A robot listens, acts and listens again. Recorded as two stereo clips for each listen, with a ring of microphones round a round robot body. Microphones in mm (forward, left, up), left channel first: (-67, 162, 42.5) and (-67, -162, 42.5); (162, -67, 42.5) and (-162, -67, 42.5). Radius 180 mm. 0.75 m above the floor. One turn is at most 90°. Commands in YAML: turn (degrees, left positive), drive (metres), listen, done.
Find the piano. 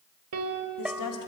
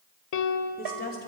turn: -35
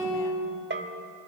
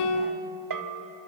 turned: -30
done: "Found it: a piano, straight ahead."